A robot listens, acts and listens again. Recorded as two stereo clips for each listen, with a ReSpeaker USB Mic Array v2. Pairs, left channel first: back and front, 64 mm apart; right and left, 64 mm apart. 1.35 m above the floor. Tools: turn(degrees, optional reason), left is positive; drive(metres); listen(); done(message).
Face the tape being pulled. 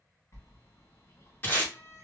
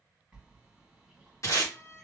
turn(degrees=-125, reason="The tape being pulled: 125° right.")
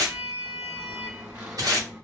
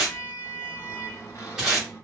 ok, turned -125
turn(degrees=10, reason="The tape being pulled is now 10° left.")
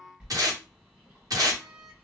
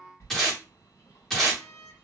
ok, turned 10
done("Facing the tape being pulled.")